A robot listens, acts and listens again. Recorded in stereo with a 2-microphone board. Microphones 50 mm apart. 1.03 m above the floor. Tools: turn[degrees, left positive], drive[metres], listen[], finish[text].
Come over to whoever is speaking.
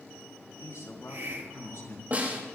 Action: turn[90]
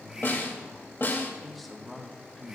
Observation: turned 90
Action: drive[1.0]
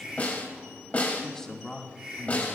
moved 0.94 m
Thought: The man speaking is now 10° left.
Action: turn[10]
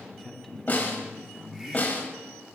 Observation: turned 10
Action: drive[1.0]
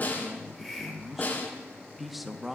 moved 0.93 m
Action: drive[1.0]
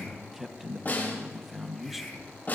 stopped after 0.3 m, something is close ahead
Action: finish[Arrived at the man speaking, straight ahead.]